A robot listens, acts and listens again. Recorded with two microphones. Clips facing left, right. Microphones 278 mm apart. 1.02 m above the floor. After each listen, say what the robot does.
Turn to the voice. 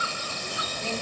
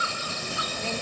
Turn 60° right.
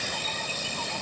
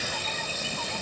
Turn 60° right.
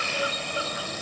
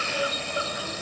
Keep listening.
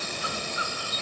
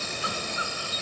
Keep listening.
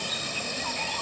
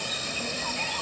Turn 15° right.
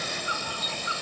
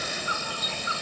Found it: a child speaking, straight ahead.